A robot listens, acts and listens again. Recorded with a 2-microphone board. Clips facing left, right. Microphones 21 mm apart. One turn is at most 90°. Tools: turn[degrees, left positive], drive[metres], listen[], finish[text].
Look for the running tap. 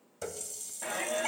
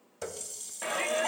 Thought: The running tap: about 20° right or 160° right.
Action: turn[-20]
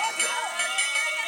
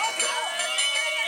Action: listen[]
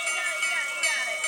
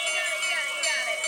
Action: listen[]
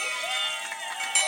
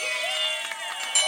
Action: finish[I heard a running tap, but can't make it out now. It was about straight ahead or 140° right.]